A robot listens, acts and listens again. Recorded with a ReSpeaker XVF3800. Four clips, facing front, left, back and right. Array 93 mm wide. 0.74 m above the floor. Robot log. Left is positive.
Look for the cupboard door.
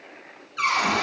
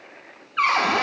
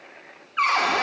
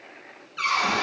note: The cupboard door: 130° left.
cmd yaw +130
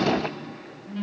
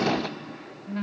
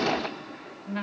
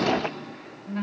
cmd idle
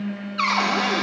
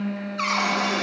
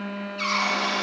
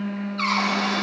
note: The cupboard door is now 10° left.
cmd yaw +10
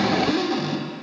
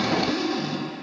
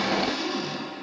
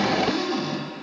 end: Found it: a cupboard door, straight ahead.